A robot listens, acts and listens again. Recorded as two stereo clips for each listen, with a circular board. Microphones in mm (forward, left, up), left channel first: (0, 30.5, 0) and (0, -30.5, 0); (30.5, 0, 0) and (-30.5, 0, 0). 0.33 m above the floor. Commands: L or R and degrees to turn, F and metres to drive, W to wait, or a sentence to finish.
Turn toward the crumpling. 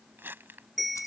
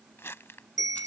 R40
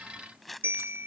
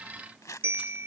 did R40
Found it: crumpling, straight ahead.